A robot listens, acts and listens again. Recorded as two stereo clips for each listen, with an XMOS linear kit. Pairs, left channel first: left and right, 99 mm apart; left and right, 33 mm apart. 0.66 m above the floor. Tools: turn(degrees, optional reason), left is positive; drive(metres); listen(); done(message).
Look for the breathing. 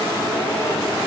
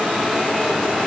listen()
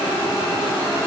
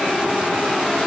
listen()
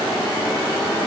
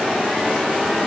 done("I can't make out breathing to turn to.")